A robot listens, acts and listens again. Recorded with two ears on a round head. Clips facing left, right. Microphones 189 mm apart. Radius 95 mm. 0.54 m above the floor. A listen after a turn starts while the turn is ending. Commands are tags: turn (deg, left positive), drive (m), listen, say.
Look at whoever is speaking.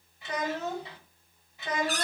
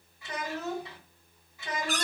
<turn deg="25"/>
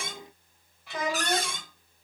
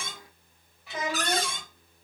<say>Facing the child speaking.</say>